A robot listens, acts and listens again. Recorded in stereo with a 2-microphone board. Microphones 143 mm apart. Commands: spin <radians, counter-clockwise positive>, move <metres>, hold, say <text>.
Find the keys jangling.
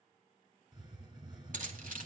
spin -1.13
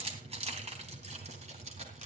spin -0.87
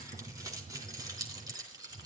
spin -0.44
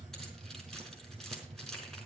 say Facing the keys jangling, over 4 m away.